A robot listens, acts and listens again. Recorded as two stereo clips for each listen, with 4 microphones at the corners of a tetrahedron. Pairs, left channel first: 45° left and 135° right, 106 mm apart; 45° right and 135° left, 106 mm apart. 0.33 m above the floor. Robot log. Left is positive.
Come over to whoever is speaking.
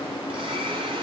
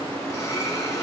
cmd idle
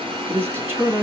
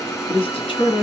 note: The man speaking: 70° right.
cmd yaw -70
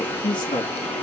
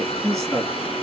cmd fwd 1.0
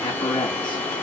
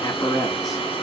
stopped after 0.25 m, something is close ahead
note: The man speaking is now 10° left.
cmd yaw +10
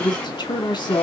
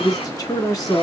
end: Something is in my way. I am facing the man speaking but have not reached it.